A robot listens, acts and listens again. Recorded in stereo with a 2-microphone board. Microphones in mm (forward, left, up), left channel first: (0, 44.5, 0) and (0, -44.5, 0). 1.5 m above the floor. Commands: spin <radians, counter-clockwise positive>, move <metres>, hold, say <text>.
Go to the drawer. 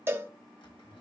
spin 1.57
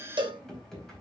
move 1.0
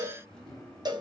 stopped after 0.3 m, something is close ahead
say Something is in my way. I am facing the drawer but have not reached it.